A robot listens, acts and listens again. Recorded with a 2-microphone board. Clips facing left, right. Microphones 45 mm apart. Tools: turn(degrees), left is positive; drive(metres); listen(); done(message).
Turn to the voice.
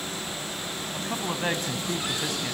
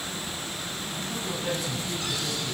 turn(degrees=50)
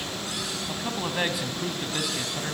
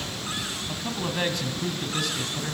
turn(degrees=10)
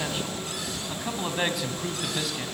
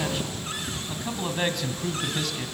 done("Facing the man speaking.")